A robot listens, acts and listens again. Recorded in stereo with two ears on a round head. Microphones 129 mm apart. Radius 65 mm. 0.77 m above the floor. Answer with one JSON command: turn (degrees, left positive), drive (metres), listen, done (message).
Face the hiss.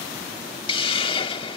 {"turn": 40}
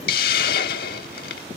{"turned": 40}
{"turn": 100}
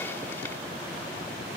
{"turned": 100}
{"listen": true}
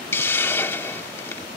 {"turn": 15}
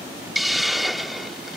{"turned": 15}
{"done": "Facing the hiss."}